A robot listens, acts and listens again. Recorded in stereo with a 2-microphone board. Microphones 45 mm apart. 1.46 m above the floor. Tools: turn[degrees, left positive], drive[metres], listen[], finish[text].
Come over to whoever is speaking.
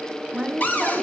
Action: turn[-30]
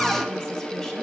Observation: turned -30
Action: listen[]
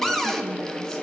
Action: listen[]
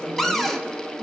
Action: finish[I heard a woman speaking, but can't make it out now. It was about 20° left or 140° right. I did not reach it.]